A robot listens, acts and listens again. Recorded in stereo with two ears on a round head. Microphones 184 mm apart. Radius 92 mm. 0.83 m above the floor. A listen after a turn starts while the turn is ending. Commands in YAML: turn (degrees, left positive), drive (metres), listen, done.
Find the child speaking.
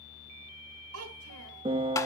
turn: -90
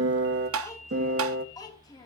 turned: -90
turn: 20
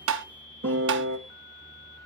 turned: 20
listen: true
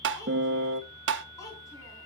turn: 15
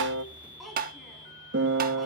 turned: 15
done: "Found it: a child speaking, straight ahead, over 4 m away."